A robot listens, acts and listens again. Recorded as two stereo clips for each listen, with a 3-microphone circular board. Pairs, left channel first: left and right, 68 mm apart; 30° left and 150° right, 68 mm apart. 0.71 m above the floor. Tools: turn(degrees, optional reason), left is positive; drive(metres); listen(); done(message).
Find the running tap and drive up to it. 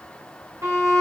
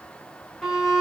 listen()
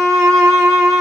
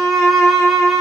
listen()
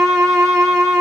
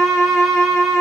done("I can't make out a running tap, only a violin.")